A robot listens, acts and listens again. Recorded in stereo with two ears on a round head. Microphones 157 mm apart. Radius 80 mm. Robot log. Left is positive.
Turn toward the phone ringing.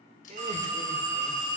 note: The phone ringing: about 45° right or 135° right.
cmd yaw -45
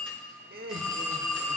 end: Found it: a phone ringing, straight ahead.